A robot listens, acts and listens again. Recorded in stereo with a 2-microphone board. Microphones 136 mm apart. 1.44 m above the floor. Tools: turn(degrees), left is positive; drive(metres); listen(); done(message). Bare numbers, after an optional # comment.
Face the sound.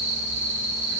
listen()
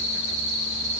listen()
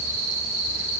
done("I can't make out anything to turn to.")